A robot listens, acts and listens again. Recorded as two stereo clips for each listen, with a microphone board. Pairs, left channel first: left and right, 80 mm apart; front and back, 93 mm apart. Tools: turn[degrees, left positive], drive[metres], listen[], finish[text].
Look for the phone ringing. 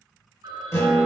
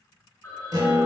Thought: The phone ringing: 70° right.
Action: turn[-70]
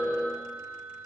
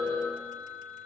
Thought: The phone ringing is now 20° left.
Action: turn[20]
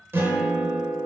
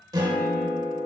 Action: listen[]
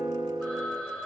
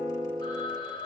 Action: finish[Found it: a phone ringing, straight ahead.]